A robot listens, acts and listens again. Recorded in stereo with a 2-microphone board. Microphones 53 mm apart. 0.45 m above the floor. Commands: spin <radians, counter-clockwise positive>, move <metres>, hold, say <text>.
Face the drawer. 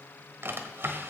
spin -0.79
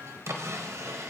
spin -1.40
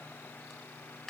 say Found it: a drawer, straight ahead.